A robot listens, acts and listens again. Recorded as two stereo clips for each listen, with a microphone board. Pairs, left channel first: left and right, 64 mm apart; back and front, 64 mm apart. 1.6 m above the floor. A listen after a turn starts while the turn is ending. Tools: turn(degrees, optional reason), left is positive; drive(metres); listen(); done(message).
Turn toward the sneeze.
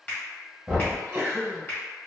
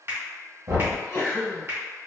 turn(degrees=-145, reason="The sneeze: 145° right.")
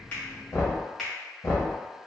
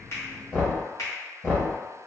done("I heard a sneeze from this way, but can't make it out now.")